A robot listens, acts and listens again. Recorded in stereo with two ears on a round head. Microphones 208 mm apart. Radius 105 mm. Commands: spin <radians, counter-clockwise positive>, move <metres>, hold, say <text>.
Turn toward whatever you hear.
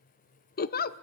spin 0.70
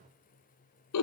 spin 1.75
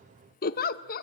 spin 0.70
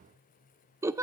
spin -0.17
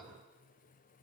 hold
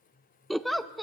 say Facing the giggle.